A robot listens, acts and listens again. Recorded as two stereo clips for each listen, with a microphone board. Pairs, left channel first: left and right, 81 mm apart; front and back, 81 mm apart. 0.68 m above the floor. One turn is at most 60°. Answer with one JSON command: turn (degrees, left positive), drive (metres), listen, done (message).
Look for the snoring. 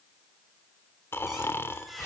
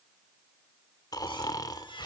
{"turn": 35}
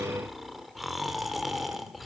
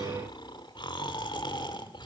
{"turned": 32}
{"done": "Found it: snoring, straight ahead."}